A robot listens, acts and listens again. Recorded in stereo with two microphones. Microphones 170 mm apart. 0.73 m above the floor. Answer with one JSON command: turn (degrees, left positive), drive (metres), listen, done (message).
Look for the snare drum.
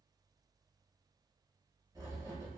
{"listen": true}
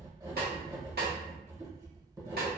{"turn": -65}
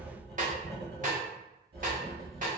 {"turn": -50}
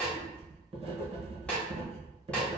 {"done": "Found it: a snare drum, straight ahead."}